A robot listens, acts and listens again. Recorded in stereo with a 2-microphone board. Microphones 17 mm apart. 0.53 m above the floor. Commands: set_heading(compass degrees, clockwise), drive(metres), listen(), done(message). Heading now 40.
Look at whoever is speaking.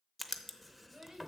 set_heading(95)
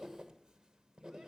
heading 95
listen()
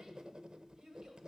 set_heading(160)
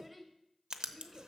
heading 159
done("Facing the child speaking.")